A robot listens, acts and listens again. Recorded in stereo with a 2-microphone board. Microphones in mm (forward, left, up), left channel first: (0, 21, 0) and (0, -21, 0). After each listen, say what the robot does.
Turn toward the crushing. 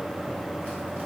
Keep listening.
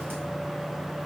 Keep listening.
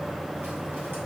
I can't make out crushing.